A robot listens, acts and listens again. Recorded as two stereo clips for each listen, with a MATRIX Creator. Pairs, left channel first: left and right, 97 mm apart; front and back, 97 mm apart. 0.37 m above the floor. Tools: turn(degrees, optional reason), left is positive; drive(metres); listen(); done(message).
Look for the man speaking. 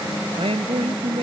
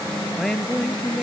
turn(degrees=-90, reason="The man speaking: 90° right.")
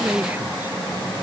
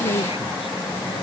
turn(degrees=-15, reason="The man speaking is now 15° right.")
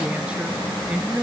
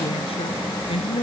turn(degrees=-15, reason="The man speaking is now 15° right.")
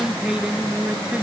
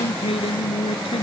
turn(degrees=-10, reason="The man speaking is now 10° right.")
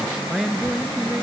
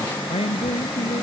done("Found it: a man speaking, straight ahead.")